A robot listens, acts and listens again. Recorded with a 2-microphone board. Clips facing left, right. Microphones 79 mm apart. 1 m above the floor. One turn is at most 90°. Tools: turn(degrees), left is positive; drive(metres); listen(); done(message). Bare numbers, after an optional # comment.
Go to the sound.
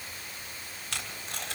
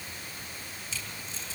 # The tape being pulled: about 75° left or 105° left.
turn(75)
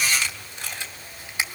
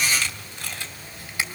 # So it is at 20° left.
turn(20)
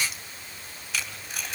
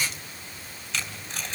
drive(1.0)
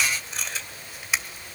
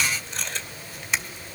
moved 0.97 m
drive(1.0)
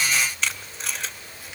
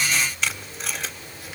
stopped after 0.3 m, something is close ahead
done("Arrived at the tape being pulled, straight ahead.")